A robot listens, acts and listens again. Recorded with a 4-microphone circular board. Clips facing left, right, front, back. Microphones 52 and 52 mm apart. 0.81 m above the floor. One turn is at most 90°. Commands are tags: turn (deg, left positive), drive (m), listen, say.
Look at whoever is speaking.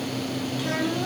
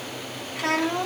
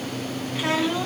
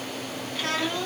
<turn deg="-75"/>
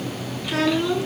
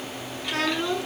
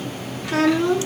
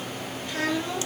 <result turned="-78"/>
<say>Facing the child speaking.</say>